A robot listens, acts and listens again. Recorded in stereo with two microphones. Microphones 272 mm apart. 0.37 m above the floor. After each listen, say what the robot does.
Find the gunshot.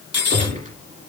Turn 30° right.
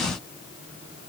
Keep listening.
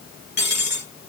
I heard a gunshot, but can't make it out now. It was about straight ahead or 120° right.